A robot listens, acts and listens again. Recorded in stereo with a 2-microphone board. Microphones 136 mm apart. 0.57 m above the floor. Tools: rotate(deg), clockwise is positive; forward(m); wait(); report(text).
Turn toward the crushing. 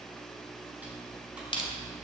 rotate(-40)
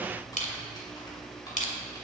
rotate(-100)
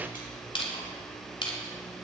rotate(-45)
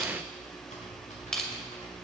report("Facing the crushing, 2 to 4 m away.")